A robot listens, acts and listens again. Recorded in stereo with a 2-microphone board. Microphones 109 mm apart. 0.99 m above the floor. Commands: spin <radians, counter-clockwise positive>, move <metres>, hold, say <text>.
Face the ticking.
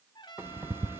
spin -0.35
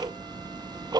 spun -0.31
spin -2.44
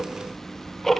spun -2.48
say Found it: ticking, straight ahead.